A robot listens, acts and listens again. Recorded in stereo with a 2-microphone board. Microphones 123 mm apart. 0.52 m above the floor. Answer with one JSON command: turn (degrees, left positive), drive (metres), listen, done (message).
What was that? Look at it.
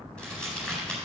{"turn": 30}
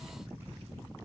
{"listen": true}
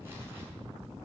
{"listen": true}
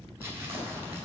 {"turn": -25}
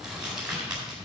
{"done": "Found it: crumpling, straight ahead, over 4 m away."}